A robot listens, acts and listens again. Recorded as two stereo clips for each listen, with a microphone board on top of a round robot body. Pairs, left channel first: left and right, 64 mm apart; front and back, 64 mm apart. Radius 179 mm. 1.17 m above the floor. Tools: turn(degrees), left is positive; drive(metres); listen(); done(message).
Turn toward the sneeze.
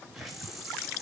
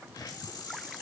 listen()
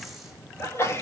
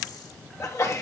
turn(degrees=40)
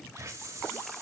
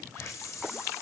done("Facing where the sneeze came from. I can't hear it now.")